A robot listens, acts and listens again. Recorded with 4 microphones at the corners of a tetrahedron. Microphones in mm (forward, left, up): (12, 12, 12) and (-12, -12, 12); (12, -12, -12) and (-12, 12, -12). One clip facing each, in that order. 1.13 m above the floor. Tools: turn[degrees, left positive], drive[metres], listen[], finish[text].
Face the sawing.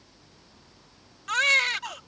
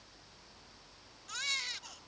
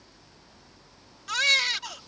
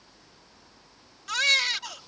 Action: listen[]
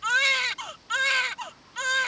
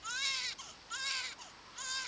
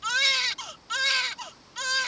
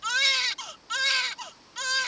Action: listen[]
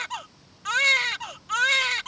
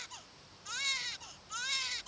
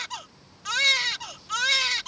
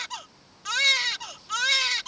Action: finish[I can't make out sawing, only a baby crying.]